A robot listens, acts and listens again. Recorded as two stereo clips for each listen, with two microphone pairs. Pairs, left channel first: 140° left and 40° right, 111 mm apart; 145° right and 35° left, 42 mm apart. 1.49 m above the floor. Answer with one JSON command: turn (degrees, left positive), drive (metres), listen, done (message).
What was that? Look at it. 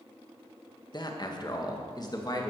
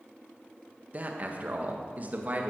{"turn": 90}
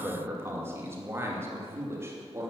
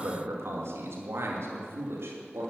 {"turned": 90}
{"turn": 25}
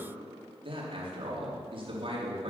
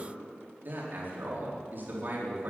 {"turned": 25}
{"done": "Facing the man speaking."}